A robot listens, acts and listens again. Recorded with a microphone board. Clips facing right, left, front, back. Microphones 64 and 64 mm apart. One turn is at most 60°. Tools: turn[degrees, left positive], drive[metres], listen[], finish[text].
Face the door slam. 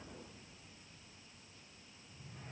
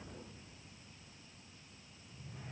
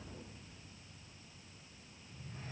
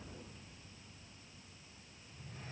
Action: listen[]
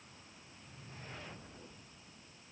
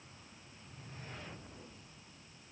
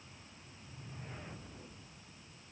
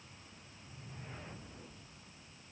Action: listen[]
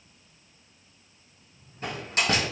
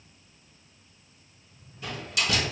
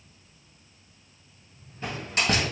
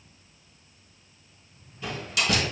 Thought: The door slam: 50° right.
Action: turn[-50]
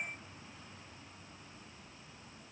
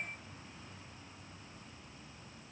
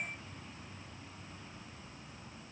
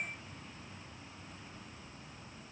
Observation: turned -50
Action: finish[I heard a door slam from this way, but can't make it out now.]